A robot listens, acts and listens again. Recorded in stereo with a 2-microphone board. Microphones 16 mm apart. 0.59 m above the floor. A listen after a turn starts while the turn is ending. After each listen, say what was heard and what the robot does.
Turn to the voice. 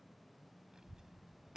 The child speaking: about 55° right or 125° right. Turn 55° right.
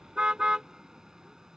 Keep listening.
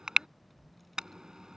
Facing the child speaking.